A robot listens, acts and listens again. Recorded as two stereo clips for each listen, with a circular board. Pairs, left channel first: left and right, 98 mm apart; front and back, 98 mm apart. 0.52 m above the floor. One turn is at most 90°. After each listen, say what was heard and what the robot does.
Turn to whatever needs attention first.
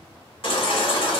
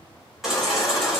The baby crying: 90° left. Turn 90° left.
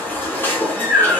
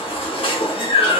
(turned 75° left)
The baby crying is now 20° left. Turn 20° left.
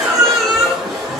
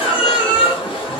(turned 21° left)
Facing the baby crying.